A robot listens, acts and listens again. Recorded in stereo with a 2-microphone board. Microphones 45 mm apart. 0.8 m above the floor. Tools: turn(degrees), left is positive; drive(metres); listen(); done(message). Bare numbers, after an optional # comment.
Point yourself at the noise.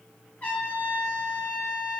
# The trumpet: about 35° left or 145° left.
turn(35)
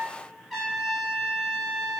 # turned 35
done("Facing the trumpet.")